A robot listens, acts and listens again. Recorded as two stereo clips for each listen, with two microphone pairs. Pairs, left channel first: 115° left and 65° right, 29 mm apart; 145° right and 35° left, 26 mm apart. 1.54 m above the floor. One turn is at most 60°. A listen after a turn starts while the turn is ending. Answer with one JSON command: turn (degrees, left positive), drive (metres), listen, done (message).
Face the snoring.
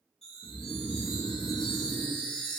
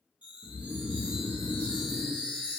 {"turn": 60}
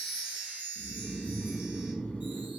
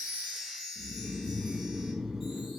{"turn": 60}
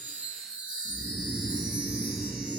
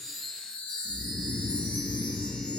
{"turn": 30}
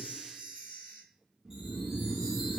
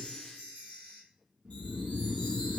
{"done": "Facing the snoring, under 1 m away."}